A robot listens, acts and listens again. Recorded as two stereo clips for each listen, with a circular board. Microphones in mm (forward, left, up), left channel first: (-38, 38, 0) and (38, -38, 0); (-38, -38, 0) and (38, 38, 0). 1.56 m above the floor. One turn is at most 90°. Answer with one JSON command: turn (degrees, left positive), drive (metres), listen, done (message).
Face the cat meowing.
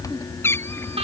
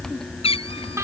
{"turn": -90}
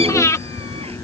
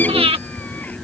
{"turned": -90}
{"turn": -70}
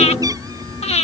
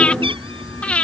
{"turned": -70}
{"listen": true}
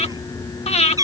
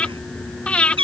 {"turn": 10}
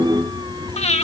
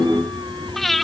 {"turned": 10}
{"listen": true}
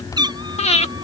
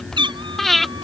{"done": "Facing the cat meowing."}